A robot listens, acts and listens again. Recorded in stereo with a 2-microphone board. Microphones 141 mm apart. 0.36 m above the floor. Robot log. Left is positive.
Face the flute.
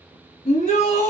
cmd idle
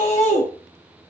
cmd idle
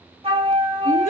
note: The flute: about 40° right or 140° right.
cmd yaw -40
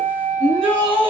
note: So it is at 95° right.
cmd yaw -95
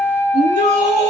note: The flute is now 15° left.
cmd yaw +15
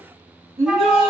end: Facing the flute.